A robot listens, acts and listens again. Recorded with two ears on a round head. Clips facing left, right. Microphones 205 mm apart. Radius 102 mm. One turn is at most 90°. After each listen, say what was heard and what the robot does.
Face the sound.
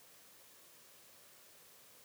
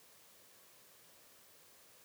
Keep listening.
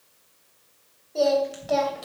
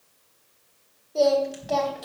Turn 30° left.
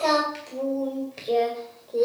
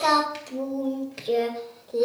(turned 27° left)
Turn 30° right.
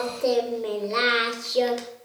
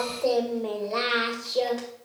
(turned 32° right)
So it is at 30° left. Turn 30° left.
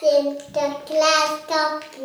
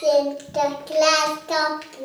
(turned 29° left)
Facing the singing, 2 to 4 m away.